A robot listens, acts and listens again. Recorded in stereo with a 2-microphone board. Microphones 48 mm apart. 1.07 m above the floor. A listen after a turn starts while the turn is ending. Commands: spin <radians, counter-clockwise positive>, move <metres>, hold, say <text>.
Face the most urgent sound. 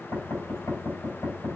hold
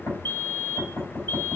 spin 0.87
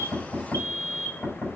spin 1.31
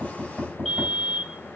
say Found it: a fire alarm, straight ahead.